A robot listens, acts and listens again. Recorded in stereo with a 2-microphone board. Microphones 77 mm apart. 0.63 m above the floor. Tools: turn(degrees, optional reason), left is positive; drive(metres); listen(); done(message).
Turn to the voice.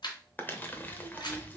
turn(degrees=-20, reason="The child speaking: about 20° right or 160° right.")
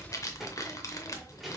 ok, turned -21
done("Facing the child speaking.")